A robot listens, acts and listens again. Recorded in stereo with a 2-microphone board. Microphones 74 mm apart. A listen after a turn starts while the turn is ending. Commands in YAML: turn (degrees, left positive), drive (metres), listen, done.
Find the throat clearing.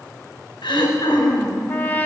turn: 90
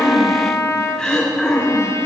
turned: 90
done: "Facing the throat clearing, 2 to 4 m away."